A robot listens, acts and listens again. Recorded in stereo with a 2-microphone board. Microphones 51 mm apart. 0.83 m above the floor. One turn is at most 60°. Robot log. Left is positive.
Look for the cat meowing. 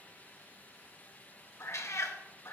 note: The cat meowing: about 70° left or 110° left.
cmd yaw +60
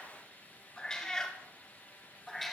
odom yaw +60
end: Found it: a cat meowing, straight ahead.